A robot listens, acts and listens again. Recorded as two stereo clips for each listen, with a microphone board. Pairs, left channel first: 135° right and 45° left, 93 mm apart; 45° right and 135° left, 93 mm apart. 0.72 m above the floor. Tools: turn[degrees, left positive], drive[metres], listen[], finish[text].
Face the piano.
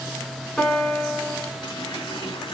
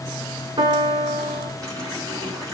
Thought: The piano: 140° left.
Action: turn[140]
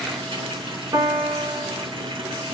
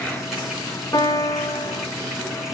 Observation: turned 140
Action: finish[Found it: a piano, straight ahead.]